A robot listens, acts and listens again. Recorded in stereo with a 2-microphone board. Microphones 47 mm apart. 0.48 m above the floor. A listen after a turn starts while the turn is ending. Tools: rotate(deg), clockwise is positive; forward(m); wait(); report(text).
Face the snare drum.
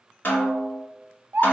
rotate(-50)
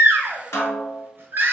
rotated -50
rotate(-80)
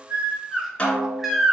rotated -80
rotate(-25)
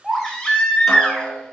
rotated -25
wait()
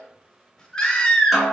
report("Facing the snare drum, 1 to 2 m away.")